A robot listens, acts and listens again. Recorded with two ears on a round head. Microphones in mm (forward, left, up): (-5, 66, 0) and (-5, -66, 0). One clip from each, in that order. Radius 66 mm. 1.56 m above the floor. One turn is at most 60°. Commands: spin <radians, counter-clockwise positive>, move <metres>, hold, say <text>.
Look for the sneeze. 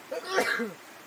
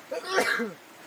spin -0.52
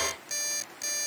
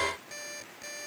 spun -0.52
hold
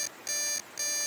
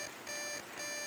say I heard a sneeze, but can't make it out now. It was about 25° left or 145° right.